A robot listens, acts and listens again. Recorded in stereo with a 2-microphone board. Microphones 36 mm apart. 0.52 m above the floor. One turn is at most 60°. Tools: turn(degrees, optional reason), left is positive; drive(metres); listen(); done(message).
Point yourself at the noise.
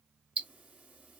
turn(degrees=-40, reason="The ticking: about 40° right or 140° right.")
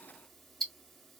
done("Facing the ticking, 1 to 2 m away.")